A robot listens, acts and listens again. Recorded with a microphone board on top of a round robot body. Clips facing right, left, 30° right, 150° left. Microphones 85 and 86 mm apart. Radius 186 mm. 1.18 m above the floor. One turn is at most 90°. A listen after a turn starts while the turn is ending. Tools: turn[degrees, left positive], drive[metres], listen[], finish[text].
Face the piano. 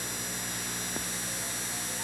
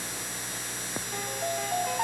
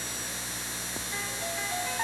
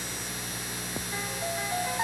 Thought: The piano: 70° left.
Action: turn[70]
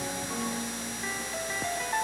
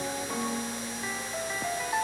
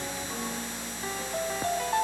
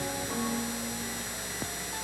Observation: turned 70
Action: finish[Facing the piano.]